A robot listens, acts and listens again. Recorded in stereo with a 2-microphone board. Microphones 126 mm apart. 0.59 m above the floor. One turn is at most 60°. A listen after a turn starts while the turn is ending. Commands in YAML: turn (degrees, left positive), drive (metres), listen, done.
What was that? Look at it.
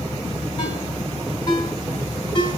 turn: 40
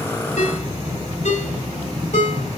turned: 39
turn: 60
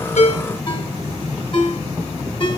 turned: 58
turn: 40
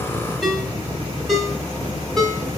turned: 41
done: "Found it: a ringtone, straight ahead."